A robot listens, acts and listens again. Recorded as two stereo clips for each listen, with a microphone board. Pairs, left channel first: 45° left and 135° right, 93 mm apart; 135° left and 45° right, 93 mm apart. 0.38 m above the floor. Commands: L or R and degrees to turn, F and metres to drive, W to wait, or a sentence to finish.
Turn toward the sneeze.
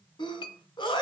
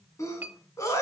L80
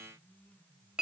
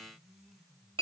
Facing where the sneeze came from. I can't hear it now.